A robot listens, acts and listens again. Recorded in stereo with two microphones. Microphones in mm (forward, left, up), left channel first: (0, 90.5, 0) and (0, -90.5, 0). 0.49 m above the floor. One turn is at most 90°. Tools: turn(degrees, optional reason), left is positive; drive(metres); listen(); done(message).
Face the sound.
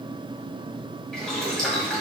turn(degrees=30)
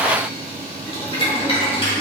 turn(degrees=90, reason="So it is at 145° left.")
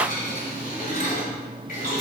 turn(degrees=55, reason="The boiling is now 55° left.")
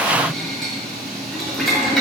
done("Facing the boiling, 1 to 2 m away.")